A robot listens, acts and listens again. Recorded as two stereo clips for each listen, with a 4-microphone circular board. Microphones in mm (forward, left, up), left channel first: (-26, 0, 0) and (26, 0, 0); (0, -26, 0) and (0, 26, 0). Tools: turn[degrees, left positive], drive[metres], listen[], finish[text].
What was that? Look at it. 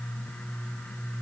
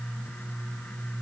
Action: listen[]
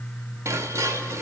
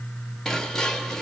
Thought: The dishes clattering: 10° right.
Action: turn[-10]
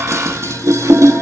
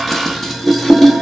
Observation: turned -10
Action: finish[Facing the dishes clattering, 1 to 2 m away.]